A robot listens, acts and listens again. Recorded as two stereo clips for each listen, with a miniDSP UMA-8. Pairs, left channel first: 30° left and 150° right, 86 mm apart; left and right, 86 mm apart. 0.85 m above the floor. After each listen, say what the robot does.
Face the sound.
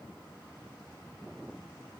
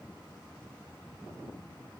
Keep listening.
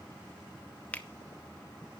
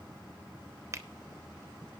Turn 40° right.
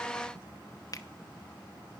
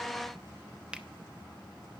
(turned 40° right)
Turn 15° right.
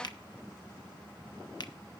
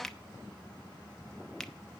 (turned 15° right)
Facing the finger snap, under 1 m away.